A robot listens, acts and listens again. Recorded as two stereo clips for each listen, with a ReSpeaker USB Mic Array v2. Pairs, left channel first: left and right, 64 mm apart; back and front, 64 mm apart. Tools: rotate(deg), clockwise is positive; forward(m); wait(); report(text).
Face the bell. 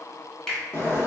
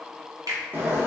wait()
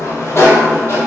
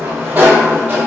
wait()
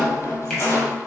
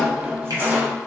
report("I can't make out a bell to turn to.")